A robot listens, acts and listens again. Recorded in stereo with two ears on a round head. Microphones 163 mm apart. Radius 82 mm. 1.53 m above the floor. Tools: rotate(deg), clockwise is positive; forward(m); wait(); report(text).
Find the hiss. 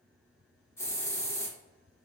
rotate(-30)
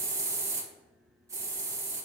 rotate(15)
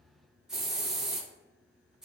report("Found it: a hiss, straight ahead, 1 to 2 m away.")